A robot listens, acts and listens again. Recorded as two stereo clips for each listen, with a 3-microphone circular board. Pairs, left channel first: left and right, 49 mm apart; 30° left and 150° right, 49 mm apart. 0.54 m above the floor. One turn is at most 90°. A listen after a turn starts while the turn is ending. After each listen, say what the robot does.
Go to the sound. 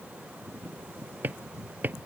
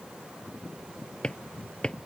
Turn 40° right.
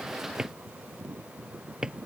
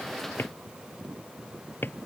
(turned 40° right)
Turn 15° right.
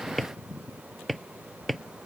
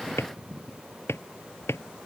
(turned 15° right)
Drive 1.0 m forward.
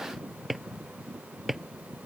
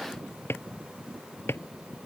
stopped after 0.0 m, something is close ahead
Blocked. The drawer is further on, straight ahead.